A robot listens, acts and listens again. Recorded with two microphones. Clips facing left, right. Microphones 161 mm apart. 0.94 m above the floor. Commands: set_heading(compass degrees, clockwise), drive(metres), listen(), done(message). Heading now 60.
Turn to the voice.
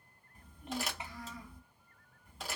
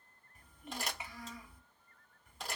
set_heading(25)
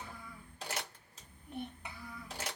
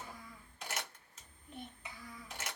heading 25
set_heading(275)
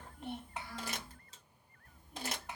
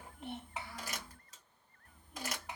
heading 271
done("Facing the child speaking.")